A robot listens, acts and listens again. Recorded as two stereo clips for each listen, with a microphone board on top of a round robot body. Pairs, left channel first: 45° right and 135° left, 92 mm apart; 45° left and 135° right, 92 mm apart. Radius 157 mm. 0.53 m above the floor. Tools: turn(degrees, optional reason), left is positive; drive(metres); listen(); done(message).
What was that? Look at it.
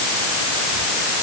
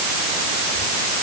listen()
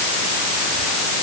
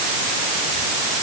listen()
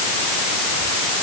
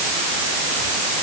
done("I can't make out anything to turn to.")